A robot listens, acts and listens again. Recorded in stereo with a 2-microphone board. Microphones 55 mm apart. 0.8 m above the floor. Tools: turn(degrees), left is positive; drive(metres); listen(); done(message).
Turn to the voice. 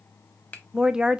turn(degrees=-30)
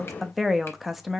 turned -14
done("Facing the woman speaking, under 1 m away.")